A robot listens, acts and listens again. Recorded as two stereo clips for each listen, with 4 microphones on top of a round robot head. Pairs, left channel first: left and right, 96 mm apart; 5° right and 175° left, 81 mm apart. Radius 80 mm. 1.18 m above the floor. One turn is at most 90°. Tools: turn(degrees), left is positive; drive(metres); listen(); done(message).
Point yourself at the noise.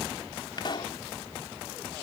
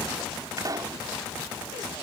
turn(degrees=90)
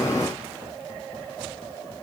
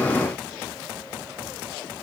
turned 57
turn(degrees=75)
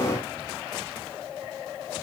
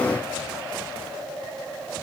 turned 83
turn(degrees=-10)
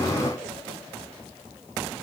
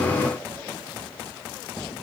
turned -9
done("Facing where the pop came from. I can't hear it now.")